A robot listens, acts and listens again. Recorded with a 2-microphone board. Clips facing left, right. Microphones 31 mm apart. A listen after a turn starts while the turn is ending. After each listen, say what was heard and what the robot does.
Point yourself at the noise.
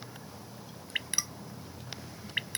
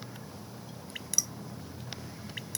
The dripping: about 40° left or 140° left. Turn 40° left.
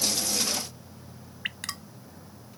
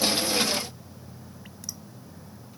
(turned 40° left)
So it is at 100° left. Turn 100° left.
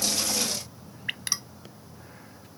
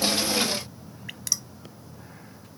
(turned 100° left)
The dripping is now 35° left. Turn 35° left.
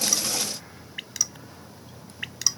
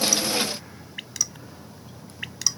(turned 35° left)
Found it: dripping, straight ahead.